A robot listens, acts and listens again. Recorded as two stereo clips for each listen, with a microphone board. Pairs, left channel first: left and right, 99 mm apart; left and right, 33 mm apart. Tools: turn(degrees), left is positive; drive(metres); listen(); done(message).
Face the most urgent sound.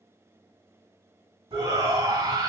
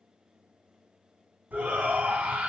turn(degrees=-35)
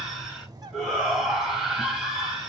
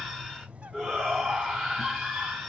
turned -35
done("Facing the shout, 2 to 4 m away.")